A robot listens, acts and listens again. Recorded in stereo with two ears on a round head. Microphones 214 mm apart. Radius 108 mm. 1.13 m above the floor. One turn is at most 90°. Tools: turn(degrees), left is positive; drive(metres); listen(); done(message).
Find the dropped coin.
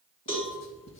listen()
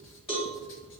listen()
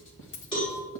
turn(degrees=50)
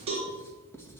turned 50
listen()
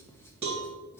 done("I heard a dropped coin, but can't make it out now. It was about straight ahead or 80° left.")